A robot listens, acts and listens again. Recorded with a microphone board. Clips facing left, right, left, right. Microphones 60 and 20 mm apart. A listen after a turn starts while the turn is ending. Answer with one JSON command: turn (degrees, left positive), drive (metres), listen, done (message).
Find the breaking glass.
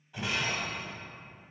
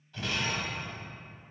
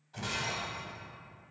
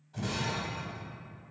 {"turn": 15}
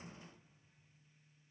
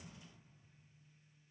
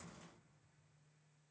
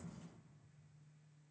{"listen": true}
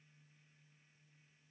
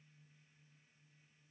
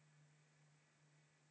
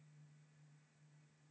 {"done": "I heard breaking glass, but can't make it out now. It was about straight ahead or 150° left."}